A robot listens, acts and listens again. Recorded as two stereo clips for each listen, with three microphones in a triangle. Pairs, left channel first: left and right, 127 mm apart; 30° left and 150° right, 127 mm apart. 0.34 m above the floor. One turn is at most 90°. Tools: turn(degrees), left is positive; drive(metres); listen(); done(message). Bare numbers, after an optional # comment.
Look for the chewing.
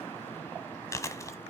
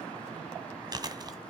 # The chewing: 155° left.
turn(90)
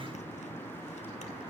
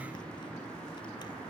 # Nothing new. It was at 65° left.
turn(65)
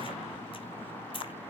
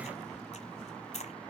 # The chewing is now 50° left.
turn(50)
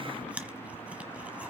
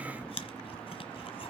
# The chewing is now 10° right.
turn(-10)
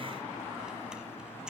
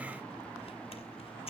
# The chewing is now 10° right.
turn(-10)
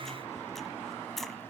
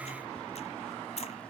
done("Facing the chewing, 1 to 2 m away.")